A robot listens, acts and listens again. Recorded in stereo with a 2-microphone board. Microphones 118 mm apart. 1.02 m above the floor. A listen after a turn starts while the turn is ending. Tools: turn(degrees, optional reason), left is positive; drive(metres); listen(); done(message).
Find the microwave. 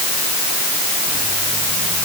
listen()
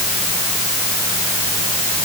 listen()
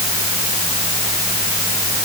done("I can't make out a microwave.")